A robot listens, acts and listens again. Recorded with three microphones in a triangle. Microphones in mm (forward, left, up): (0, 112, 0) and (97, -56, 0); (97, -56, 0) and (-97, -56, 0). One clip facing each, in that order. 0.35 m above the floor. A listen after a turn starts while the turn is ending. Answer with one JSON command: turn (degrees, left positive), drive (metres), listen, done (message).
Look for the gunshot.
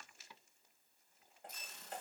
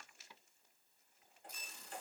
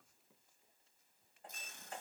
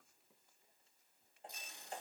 {"listen": true}
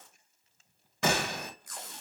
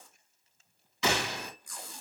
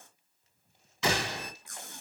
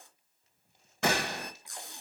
{"turn": 150}
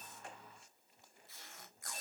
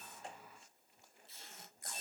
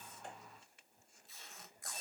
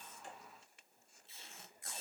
{"done": "Facing where the gunshot came from. I can't hear it now."}